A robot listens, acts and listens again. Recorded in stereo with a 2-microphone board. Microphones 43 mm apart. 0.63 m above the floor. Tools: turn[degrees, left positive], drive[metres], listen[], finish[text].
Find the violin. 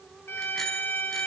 Thought: The violin: about 65° left or 115° left.
Action: turn[65]
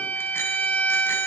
Thought: So it is at 45° left.
Action: turn[45]
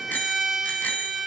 Thought: The violin is now 10° right.
Action: turn[-10]
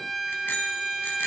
Action: finish[Facing the violin.]